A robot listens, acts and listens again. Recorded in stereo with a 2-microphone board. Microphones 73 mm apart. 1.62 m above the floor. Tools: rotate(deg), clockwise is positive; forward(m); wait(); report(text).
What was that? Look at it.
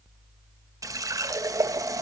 rotate(50)
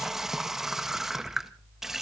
rotate(10)
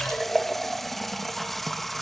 report("Found it: a running tap, straight ahead.")